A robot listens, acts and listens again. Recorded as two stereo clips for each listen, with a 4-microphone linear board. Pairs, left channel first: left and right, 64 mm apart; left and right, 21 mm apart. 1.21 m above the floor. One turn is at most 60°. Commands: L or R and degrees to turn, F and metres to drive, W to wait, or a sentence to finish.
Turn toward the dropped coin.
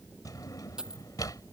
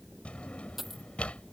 R30
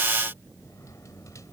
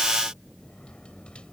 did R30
W
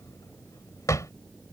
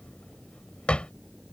I heard a dropped coin, but can't make it out now. It was about 20° left or 140° right.